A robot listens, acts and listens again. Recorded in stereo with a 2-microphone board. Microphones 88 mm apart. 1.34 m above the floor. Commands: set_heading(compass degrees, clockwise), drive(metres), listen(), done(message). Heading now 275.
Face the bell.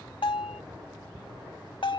set_heading(200)
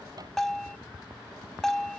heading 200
done("Facing the bell.")